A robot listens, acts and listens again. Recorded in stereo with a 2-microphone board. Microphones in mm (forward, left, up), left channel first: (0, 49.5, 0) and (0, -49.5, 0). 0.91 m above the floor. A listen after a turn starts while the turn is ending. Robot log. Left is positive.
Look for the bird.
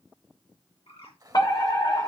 cmd yaw +90
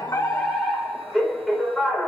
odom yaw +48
note: Nothing new. It was at 40° left.
cmd yaw +40
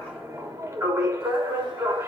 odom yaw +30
note: Nothing new. It was at 10° left.
cmd yaw +10
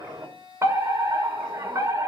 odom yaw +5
end: Facing where the bird came from. I can't hear it now.